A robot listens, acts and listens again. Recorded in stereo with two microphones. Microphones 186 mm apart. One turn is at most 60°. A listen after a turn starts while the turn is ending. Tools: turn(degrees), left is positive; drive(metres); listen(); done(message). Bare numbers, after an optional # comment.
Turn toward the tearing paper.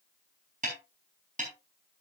listen()
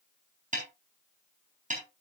listen()
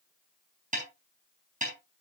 done("I can't make out tearing paper, only a snare drum.")